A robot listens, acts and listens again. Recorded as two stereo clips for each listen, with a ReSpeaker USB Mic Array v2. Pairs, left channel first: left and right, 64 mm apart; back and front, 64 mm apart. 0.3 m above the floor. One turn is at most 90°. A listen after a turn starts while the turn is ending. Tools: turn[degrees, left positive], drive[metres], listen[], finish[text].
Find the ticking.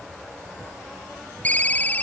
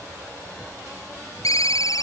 Action: listen[]
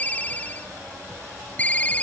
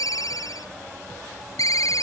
Action: listen[]
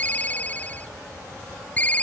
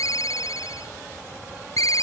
Action: finish[I can't make out ticking to turn to.]